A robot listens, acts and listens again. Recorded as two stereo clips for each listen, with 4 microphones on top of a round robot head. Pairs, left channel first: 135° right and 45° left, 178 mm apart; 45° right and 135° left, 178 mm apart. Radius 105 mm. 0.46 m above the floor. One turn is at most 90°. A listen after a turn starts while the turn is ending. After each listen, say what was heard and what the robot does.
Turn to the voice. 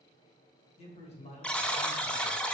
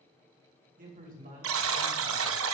The man speaking: 175° left. Turn 90° left.
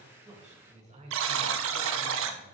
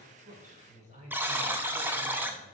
The man speaking is now 90° left. Turn 90° left.
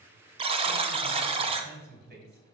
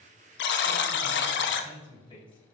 The man speaking is now 15° left. Turn 15° left.
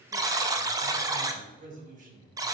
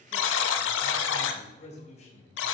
Facing the man speaking.